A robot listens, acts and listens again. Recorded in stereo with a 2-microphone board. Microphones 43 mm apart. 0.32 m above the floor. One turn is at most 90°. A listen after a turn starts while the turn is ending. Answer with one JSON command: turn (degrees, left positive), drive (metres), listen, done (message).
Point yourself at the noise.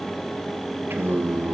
{"turn": -60}
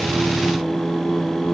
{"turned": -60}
{"turn": 10}
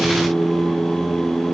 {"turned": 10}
{"turn": 15}
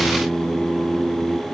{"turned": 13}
{"turn": 15}
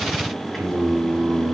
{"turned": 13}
{"turn": 10}
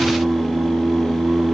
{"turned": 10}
{"done": "Found it: singing, straight ahead, 2 to 4 m away."}